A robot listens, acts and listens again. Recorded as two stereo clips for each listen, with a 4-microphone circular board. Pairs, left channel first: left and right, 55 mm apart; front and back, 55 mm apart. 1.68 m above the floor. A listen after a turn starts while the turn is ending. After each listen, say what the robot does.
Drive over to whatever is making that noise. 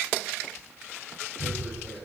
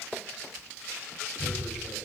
Turn 45° right.
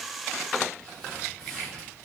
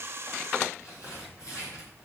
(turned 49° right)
Drive 1.0 m forward.
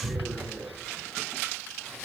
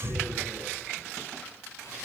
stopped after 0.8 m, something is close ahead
Something is in my way. I am facing the tearing paper but have not reached it.